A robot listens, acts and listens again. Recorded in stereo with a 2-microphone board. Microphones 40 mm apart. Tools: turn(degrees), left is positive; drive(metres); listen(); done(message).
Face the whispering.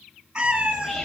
turn(degrees=30)
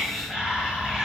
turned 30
turn(degrees=-20)
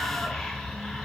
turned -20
done("Facing the whispering, 1 to 2 m away.")